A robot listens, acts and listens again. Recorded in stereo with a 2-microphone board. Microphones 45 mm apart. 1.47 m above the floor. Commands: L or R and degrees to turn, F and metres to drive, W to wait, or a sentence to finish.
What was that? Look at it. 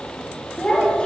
L20
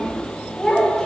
L30
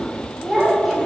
Facing the child speaking, 2 to 4 m away.